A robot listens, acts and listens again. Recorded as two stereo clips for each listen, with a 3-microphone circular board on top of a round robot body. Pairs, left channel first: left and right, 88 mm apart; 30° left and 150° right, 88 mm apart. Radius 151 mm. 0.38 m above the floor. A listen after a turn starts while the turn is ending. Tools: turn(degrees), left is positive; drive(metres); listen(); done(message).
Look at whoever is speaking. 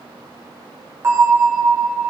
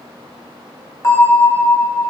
listen()
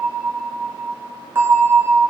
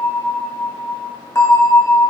listen()
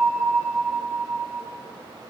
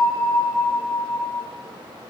done("I can't make out anyone speaking, only a bell.")